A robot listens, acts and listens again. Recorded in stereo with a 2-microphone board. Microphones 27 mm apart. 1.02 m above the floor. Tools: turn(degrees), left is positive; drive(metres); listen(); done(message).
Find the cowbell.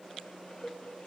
turn(degrees=30)
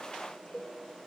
turn(degrees=135)
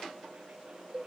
turn(degrees=-35)
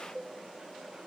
turn(degrees=10)
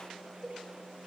done("Facing the cowbell.")